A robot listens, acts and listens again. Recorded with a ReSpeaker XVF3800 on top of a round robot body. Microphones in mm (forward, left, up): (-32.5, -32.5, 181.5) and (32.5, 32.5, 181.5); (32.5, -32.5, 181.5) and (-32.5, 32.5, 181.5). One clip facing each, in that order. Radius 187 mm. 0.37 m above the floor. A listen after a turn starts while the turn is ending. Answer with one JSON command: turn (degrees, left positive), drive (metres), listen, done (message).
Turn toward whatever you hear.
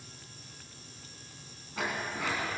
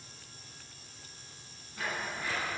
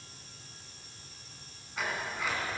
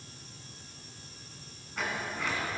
{"turn": -130}
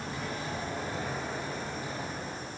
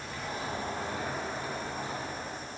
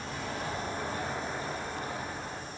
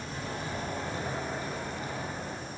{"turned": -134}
{"done": "Facing the sliding door."}